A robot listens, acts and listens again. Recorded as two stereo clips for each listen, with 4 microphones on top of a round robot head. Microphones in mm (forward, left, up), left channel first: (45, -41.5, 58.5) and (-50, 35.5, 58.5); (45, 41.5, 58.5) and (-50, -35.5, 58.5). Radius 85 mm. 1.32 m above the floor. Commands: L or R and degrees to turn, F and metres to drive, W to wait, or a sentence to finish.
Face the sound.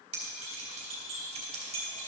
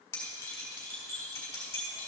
L110
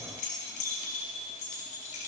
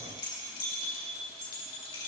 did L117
Found it: keys jangling, straight ahead.